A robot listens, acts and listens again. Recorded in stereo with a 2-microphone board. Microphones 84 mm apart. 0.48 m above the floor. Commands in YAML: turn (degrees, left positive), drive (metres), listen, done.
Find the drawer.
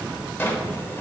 turn: 25
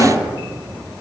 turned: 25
turn: 130
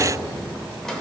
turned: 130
done: "Found it: a drawer, straight ahead."